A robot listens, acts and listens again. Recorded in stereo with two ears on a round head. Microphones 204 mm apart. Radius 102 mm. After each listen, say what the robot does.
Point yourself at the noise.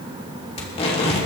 Turn 30° left.
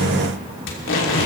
Turn 120° left.
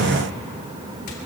Keep listening.
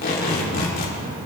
Turn 40° left.
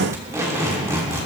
Turn 15° right.
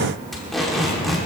Facing the tape being pulled, 2 to 4 m away.